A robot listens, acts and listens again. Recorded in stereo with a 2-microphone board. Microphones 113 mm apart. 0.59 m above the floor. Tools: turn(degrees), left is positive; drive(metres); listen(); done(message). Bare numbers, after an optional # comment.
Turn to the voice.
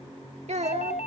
# The child speaking: about 75° right or 105° right.
turn(-75)
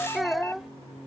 done("Facing the child speaking.")